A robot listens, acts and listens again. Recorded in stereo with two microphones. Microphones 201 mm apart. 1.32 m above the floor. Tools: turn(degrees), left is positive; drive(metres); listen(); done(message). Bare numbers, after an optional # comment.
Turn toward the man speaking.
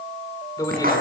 # The man speaking: about 15° left or 165° left.
turn(15)
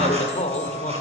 # The man speaking: about 35° left or 145° left.
turn(35)
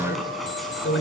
# So it is at 105° left.
turn(105)
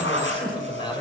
# The man speaking is now 25° left.
turn(25)
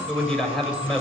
done("Found it: a man speaking, straight ahead.")